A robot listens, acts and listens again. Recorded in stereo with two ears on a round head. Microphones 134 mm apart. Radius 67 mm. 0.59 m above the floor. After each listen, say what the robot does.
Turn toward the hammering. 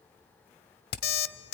Turn 70° left.
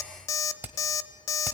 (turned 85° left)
Turn 10° right.
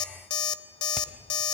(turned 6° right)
Keep listening.
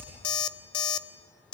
Found it: hammering, straight ahead.